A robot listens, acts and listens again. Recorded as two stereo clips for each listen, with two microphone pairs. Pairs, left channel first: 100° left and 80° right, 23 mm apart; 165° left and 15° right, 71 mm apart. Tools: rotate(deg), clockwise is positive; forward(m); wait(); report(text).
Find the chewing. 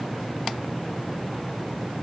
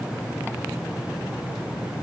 wait()
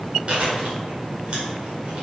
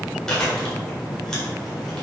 rotate(115)
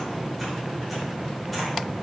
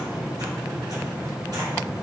wait()
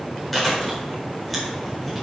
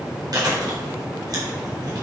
rotate(-20)
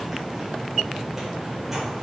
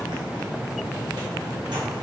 wait()
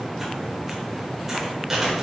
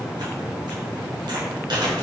report("Found it: chewing, straight ahead, over 4 m away.")